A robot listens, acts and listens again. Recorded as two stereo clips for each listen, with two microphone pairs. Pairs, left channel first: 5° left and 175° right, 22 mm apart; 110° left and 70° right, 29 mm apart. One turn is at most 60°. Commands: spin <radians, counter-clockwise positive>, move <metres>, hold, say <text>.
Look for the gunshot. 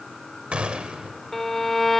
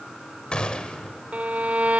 spin 1.05
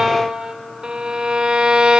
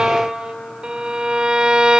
spin 1.05
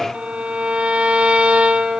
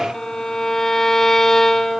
spin 0.70
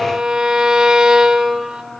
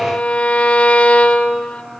say I heard a gunshot from this way, but can't make it out now.